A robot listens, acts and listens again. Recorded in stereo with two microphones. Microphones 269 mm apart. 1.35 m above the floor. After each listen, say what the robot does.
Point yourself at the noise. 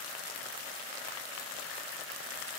Keep listening.
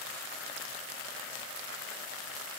Keep listening.
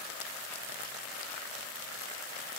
I can't make out anything.